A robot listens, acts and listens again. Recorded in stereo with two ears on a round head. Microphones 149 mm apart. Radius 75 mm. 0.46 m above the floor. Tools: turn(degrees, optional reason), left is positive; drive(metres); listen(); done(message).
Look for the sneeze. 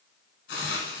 listen()
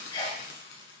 turn(degrees=30, reason="The sneeze: about 30° left or 150° left.")
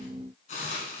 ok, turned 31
listen()
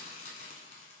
done("I heard a sneeze, but can't make it out now. It was about straight ahead or 120° left.")